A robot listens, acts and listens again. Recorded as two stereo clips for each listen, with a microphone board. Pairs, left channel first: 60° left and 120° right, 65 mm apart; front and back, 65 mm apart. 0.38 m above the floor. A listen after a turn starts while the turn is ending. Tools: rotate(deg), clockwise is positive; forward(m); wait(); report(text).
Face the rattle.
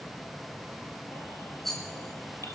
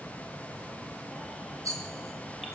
rotate(-145)
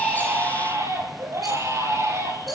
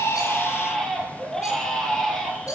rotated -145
wait()
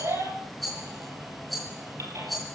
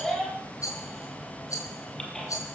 rotate(30)
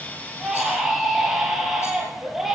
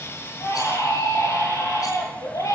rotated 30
wait()
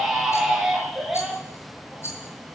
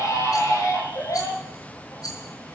rotate(-15)
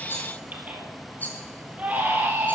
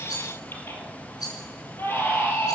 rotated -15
report("Facing the rattle, over 4 m away.")